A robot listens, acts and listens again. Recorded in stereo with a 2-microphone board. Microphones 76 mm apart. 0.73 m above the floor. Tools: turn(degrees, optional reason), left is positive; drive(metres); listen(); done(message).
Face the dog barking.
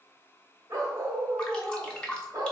turn(degrees=-55, reason="The dog barking: about 55° right or 125° right.")
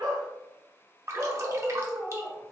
turn(degrees=-25, reason="So it is at 25° right.")
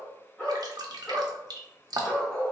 turn(degrees=15, reason="The dog barking is now 15° left.")
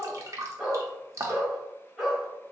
done("Found it: a dog barking, straight ahead, 1 to 2 m away.")